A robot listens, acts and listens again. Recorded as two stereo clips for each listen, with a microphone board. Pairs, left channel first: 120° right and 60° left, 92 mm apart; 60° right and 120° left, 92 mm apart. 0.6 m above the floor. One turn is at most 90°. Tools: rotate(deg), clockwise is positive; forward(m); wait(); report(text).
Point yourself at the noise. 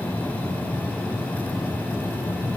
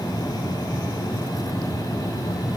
wait()
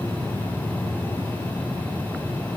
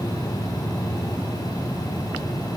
wait()
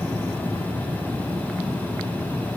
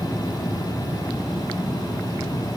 report("I can't make out anything to turn to.")